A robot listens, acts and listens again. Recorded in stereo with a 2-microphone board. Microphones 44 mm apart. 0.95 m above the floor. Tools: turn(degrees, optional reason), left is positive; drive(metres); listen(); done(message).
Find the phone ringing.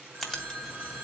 turn(degrees=-40, reason="The phone ringing: about 40° right or 140° right.")
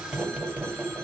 listen()
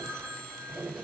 turn(degrees=-100, reason="So it is at 100° right.")
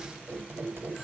listen()
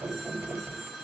turn(degrees=-15, reason="The phone ringing is now 15° right.")
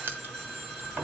done("Facing the phone ringing, 2 to 4 m away.")